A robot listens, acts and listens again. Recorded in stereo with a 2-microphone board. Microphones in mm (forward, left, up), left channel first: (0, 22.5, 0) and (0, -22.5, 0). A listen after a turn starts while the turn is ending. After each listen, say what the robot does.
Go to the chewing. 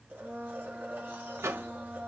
Keep listening.
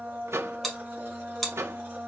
Turn 30° left.
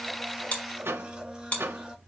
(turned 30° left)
Turn 145° left.
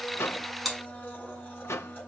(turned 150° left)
Drive 1.0 m forward.
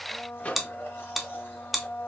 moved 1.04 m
Drive 1.0 m forward.
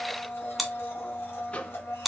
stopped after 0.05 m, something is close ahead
Arrived at the chewing, straight ahead.